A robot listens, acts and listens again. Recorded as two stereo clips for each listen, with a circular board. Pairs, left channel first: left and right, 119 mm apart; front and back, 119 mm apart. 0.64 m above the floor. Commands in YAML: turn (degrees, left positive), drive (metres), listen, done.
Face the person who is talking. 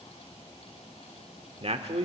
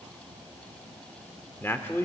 turn: -70
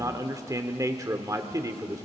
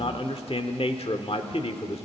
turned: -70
turn: -30
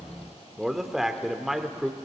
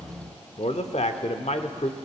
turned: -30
done: "Found it: a man speaking, straight ahead."